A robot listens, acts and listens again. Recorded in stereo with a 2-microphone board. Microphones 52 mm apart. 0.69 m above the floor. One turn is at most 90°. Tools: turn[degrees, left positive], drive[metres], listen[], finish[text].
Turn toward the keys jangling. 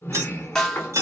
Action: turn[-90]
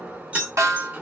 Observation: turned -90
Thought: So it is at 30° right.
Action: turn[-30]
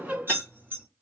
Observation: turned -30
Thought: The keys jangling is now 50° right.
Action: turn[-50]
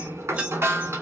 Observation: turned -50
Thought: The keys jangling is now 25° right.
Action: turn[-25]
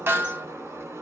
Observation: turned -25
Action: listen[]
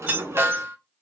Thought: The keys jangling is now 30° right.
Action: turn[-30]
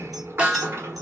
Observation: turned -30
Action: listen[]
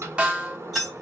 Action: finish[Facing the keys jangling, 2 to 4 m away.]